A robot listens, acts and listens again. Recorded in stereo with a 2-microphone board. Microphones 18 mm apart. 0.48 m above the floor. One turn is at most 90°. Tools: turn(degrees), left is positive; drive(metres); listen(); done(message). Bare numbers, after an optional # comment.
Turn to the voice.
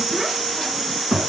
# The child speaking: about 20° right or 160° right.
turn(-20)
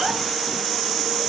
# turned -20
listen()
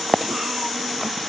listen()
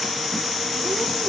done("I heard a child speaking, but can't make it out now. It was about straight ahead or 140° right.")